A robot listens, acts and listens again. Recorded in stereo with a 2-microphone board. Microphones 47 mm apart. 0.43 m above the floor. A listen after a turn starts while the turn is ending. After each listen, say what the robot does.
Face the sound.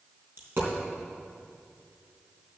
Turn 55° right.
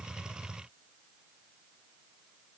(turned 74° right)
Keep listening.
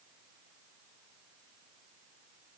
I heard a dropped coin, but can't make it out now. It was about 20° left or 50° right.